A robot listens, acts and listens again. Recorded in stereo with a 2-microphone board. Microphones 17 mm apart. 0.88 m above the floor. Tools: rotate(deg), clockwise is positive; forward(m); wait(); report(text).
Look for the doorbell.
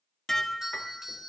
rotate(25)
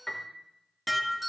wait()
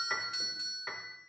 report("Facing the doorbell.")